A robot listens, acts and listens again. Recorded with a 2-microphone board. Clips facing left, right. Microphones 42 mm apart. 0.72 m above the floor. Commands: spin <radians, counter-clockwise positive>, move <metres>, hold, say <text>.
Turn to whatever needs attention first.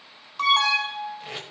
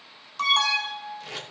spin 0.52
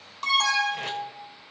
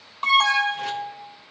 spin -0.35
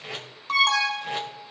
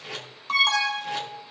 say Facing the alarm.